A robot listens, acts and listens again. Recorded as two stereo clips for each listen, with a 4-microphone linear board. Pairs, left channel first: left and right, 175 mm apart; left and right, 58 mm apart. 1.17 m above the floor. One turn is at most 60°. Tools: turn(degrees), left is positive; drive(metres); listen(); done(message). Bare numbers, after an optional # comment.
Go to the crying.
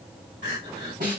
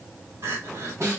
# The crying: about 75° right or 105° right.
turn(-60)
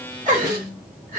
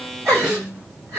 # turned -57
# So it is at 50° right.
turn(-50)
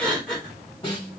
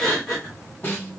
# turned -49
drive(1.0)
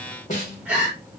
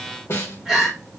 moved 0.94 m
# The crying is now 10° right.
turn(-10)
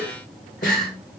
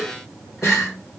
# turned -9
drive(1.0)
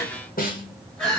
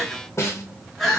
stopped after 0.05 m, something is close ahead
done("I am next to the crying.")